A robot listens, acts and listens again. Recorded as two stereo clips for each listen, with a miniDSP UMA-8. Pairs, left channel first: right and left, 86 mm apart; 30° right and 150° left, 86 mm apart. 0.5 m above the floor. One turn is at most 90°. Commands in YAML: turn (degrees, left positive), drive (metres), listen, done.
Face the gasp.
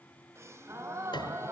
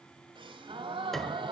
turn: 90
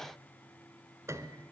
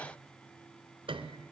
turn: 55
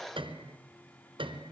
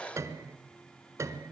done: "Facing where the gasp came from. I can't hear it now."